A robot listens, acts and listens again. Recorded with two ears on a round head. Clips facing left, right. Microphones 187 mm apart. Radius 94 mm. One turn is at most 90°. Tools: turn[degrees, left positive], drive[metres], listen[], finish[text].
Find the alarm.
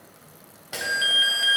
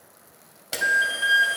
Thought: The alarm: about 35° left or 145° left.
Action: turn[35]
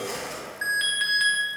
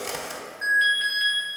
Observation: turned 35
Thought: So it is at 100° left.
Action: turn[90]
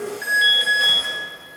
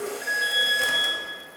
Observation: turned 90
Thought: The alarm is now 55° left.
Action: turn[55]
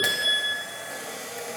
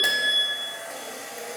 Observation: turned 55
Thought: The alarm is now 15° left.
Action: turn[15]
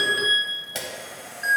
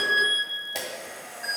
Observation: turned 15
Action: finish[Found it: an alarm, straight ahead, 1 to 2 m away.]